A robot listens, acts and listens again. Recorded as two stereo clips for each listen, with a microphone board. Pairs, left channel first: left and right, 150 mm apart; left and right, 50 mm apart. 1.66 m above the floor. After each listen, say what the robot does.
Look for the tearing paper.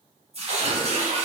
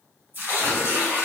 Turn 45° right.
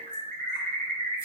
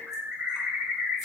Keep listening.
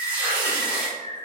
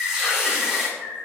Turn 10° right.
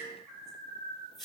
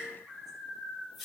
Found it: tearing paper, straight ahead.